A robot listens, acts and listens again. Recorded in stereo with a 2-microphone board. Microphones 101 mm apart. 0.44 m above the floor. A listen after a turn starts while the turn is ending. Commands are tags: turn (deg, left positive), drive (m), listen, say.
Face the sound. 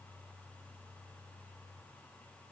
<listen/>
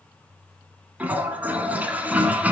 <turn deg="-15"/>
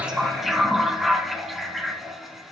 <say>Facing the toilet flushing, 1 to 2 m away.</say>